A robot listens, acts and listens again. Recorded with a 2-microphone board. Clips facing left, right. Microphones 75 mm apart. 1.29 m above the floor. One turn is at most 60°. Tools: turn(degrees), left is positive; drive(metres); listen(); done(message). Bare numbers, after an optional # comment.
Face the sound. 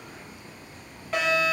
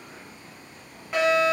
turn(-30)
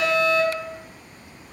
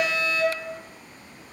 # So it is at 25° left.
turn(25)
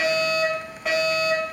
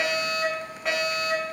done("Facing the fire alarm, 1 to 2 m away.")